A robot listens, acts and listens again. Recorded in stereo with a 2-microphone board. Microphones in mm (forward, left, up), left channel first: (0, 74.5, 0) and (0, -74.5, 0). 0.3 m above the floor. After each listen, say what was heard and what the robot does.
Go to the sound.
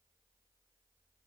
Keep listening.
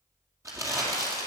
The crumpling: about 20° right or 160° right. Turn 20° right.
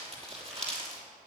So it is at 140° right. Turn 140° right.
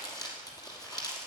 The crumpling is now 25° left. Turn 25° left.
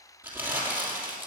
The crumpling is now 15° right. Turn 15° right.
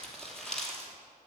Drive 1.0 m forward.
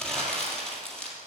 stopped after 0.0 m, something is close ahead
Blocked. The crumpling is further on, straight ahead.